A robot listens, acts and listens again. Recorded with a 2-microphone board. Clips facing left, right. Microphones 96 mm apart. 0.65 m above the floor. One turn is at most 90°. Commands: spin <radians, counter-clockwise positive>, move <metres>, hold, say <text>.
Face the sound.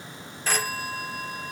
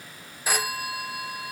spin -0.52
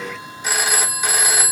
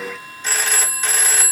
spin 0.17
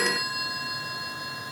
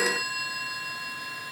say Found it: a phone ringing, straight ahead.